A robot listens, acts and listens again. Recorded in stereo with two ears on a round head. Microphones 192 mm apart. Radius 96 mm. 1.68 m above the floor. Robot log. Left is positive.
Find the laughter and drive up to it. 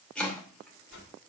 cmd idle
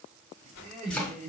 note: The laughter: about 35° right or 145° right.
cmd yaw -35
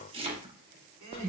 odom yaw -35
note: So it is at 105° right.
cmd yaw -105
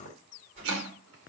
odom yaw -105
cmd idle
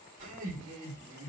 note: The laughter is now 40° right.
cmd yaw -40
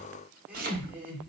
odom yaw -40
cmd fwd 1.0
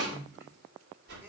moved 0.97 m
cmd idle
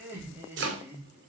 note: The laughter is now 10° right.
cmd yaw -10
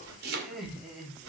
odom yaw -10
cmd fwd 1.0
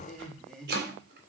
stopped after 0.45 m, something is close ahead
end: Blocked. The laughter is further on, straight ahead.